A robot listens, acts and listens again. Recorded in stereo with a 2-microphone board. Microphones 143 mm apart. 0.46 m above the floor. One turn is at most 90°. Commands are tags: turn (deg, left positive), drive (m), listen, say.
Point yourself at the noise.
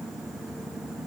<listen/>
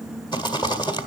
<turn deg="30"/>
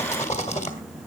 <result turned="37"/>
<turn deg="90"/>
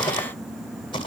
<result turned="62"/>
<turn deg="45"/>
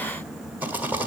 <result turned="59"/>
<turn deg="-15"/>
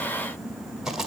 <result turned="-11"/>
<say>Facing the rattle.</say>